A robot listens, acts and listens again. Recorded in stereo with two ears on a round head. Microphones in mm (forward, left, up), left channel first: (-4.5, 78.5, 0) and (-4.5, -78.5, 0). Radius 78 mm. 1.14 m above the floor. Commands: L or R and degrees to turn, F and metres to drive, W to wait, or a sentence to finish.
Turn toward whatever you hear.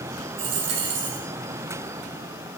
R70
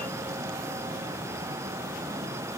W
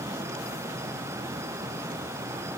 I heard a dropped coin, but can't make it out now. It was about straight ahead or 40° right.